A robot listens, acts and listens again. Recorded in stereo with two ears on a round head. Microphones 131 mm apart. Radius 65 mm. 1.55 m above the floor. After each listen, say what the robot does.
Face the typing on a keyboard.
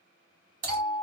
Turn 55° right.
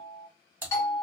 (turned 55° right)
Turn 15° right.
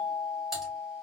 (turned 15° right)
Keep listening.
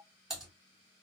Found it: typing on a keyboard, straight ahead.